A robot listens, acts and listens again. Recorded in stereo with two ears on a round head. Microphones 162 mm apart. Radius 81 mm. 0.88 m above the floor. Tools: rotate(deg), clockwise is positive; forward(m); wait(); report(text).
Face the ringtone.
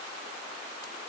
wait()
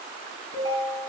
rotate(-60)
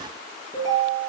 report("Facing the ringtone.")